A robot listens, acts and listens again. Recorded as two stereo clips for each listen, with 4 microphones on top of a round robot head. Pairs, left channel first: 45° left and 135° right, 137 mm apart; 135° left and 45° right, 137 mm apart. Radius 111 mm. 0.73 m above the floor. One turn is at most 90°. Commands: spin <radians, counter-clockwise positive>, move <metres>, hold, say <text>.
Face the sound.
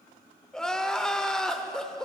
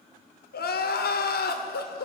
spin 1.57
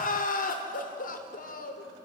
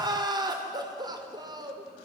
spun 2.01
spin 0.35
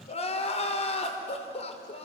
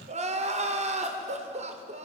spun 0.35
say Found it: crying, straight ahead, 1 to 2 m away.